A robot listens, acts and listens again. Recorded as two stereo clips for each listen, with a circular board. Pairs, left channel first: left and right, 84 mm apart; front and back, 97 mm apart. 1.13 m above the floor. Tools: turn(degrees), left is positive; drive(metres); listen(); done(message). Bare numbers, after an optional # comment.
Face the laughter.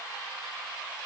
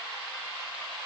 listen()
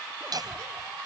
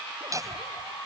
# The laughter: 125° right.
turn(-125)
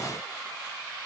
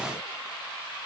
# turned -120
listen()
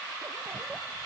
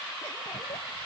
listen()
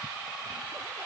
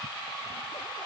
done("I heard laughter from this way, but can't make it out now.")